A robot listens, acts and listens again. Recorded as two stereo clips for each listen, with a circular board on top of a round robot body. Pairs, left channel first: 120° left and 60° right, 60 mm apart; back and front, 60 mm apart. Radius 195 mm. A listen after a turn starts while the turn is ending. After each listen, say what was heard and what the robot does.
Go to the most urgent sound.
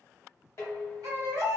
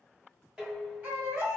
The baby crying: 55° right. Turn 55° right.
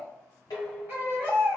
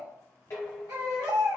Drive 1.0 m forward.
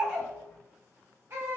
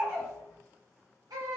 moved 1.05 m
Drive 1.0 m forward.
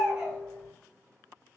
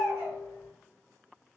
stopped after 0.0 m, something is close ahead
Arrived at the baby crying, straight ahead.